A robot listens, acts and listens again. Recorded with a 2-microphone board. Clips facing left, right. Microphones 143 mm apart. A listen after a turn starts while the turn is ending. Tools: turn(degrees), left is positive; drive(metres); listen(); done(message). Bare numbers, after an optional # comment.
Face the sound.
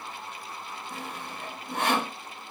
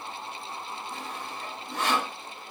# The sawing: about 55° left or 125° left.
turn(55)
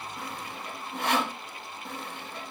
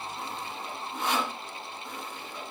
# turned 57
# So it is at 65° left.
turn(65)
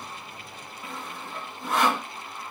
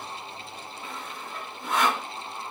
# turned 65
done("Found it: sawing, straight ahead, under 1 m away.")